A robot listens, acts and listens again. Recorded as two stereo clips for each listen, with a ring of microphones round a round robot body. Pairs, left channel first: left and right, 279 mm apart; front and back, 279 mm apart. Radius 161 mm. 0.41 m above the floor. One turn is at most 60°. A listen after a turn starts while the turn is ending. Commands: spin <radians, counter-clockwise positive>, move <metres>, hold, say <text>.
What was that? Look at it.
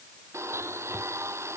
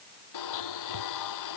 spin -0.17
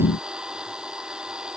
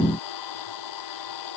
say Facing the blender.